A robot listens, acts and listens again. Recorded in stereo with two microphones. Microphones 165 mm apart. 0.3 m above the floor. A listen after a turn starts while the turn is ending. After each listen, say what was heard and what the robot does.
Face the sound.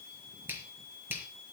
Turn 30° right.
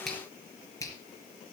So it is at 20° left. Turn 20° left.
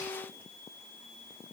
Keep listening.
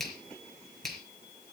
Found it: a finger snap, straight ahead, 2 to 4 m away.